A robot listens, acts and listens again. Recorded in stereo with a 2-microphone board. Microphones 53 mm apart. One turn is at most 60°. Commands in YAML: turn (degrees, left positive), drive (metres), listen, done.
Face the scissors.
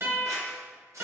turn: -60
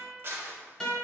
turn: -50
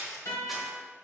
done: "Found it: scissors, straight ahead, under 1 m away."